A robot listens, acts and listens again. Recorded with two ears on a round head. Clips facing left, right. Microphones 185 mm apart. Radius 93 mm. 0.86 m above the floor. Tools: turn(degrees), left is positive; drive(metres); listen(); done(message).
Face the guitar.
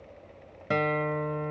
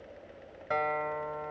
turn(degrees=40)
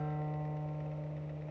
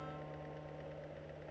turn(degrees=95)
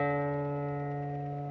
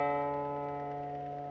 turn(degrees=15)
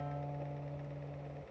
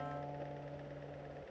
done("Found it: a guitar, straight ahead.")